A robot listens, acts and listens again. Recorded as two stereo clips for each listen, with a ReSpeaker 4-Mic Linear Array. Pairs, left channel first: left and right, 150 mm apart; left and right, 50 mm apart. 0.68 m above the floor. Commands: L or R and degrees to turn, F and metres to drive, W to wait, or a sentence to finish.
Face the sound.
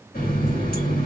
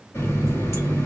L90
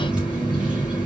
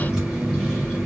Facing the running tap.